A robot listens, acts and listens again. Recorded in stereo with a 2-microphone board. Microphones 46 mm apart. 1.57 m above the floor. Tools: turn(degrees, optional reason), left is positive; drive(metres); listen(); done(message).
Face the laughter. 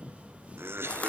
turn(degrees=-60, reason="The laughter: about 60° right or 120° right.")
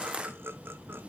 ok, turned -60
turn(degrees=-60, reason="So it is at 60° right.")
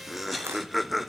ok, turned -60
done("Facing the laughter.")